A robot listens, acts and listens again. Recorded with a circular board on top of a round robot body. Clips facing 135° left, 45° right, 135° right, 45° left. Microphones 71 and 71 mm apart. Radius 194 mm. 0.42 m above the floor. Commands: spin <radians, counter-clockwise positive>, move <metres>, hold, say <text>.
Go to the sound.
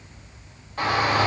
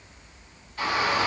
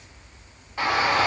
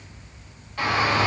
spin 2.79
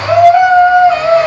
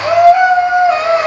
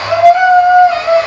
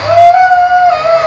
spin 0.61
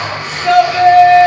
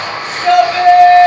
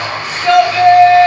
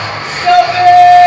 spin -0.17
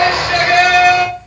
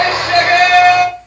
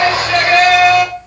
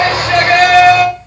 move 1.0
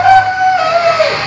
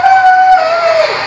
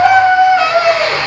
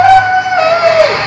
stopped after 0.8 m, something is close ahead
spin -0.17
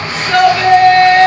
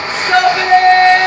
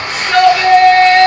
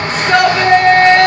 say I am next to the shout.